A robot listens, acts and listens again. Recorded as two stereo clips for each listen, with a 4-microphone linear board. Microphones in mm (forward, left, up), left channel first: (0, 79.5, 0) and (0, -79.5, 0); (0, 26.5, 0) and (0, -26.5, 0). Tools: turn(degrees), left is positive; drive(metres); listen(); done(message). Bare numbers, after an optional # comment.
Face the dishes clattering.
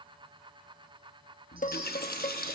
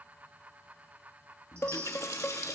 # The dishes clattering: about 60° left or 120° left.
turn(60)
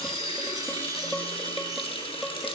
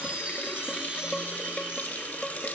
done("Facing the dishes clattering.")